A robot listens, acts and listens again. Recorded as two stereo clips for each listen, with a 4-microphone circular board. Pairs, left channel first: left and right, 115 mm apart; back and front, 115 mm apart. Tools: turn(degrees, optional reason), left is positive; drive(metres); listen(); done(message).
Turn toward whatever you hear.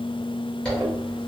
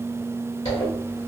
turn(degrees=170, reason="The zipper: 170° left.")
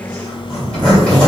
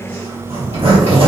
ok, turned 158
turn(degrees=10, reason="The zipper is now 10° left.")
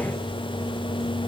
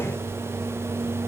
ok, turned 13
listen()
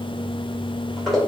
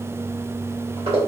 done("Facing the zipper, 1 to 2 m away.")